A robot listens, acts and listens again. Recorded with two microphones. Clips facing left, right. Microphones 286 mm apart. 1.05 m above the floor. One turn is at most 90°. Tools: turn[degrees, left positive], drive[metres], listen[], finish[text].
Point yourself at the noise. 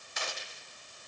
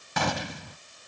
Action: turn[-90]
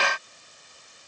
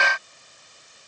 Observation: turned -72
Thought: Nothing new. It was at 20° right.
Action: turn[-20]
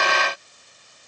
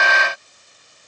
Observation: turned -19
Action: finish[I heard a gunshot from this way, but can't make it out now.]